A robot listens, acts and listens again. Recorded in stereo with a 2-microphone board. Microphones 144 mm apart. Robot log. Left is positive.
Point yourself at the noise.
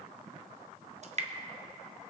note: The dripping: about 50° right or 130° right.
cmd yaw -50
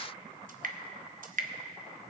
note: So it is at 75° right.
cmd yaw -75
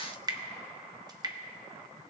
note: The dripping is now 30° right.
cmd yaw -30
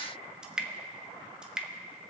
end: Found it: dripping, straight ahead, under 1 m away.